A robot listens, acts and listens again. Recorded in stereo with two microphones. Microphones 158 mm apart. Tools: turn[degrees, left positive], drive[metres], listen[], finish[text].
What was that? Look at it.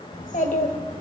Thought: The child speaking: about 60° left or 120° left.
Action: turn[60]
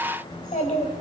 Thought: So it is at 55° left.
Action: turn[55]
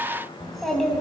Action: finish[Facing the child speaking, 2 to 4 m away.]